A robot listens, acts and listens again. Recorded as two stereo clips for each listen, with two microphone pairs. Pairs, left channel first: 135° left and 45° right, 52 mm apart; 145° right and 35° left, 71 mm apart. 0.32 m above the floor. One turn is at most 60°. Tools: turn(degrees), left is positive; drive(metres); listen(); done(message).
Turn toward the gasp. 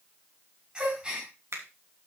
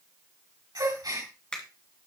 turn(degrees=25)
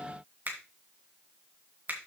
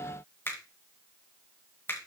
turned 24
done("Facing where the gasp came from. I can't hear it now.")